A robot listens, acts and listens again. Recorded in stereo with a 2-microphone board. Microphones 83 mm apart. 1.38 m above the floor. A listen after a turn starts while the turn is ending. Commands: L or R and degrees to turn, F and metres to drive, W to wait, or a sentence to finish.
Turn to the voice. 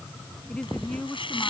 L30
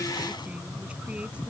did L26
W
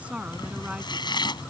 R15
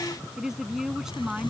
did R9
Facing the woman speaking.